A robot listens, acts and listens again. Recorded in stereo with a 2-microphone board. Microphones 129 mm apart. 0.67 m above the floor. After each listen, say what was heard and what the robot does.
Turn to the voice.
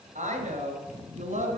The woman speaking: about 75° right or 105° right. Turn 75° right.
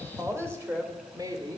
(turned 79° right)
So it is at 30° right. Turn 30° right.
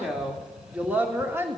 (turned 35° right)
The woman speaking is now 20° right. Turn 20° right.
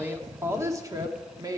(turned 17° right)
The woman speaking is now 25° right. Turn 25° right.
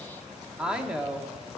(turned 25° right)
Found it: a woman speaking, straight ahead, 1 to 2 m away.